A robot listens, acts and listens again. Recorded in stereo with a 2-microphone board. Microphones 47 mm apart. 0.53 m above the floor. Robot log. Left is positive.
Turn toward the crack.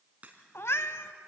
note: The crack: about 35° right or 145° right.
cmd yaw -35
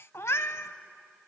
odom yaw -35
cmd idle
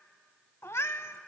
end: I heard a crack, but can't make it out now. It was about straight ahead or 110° right.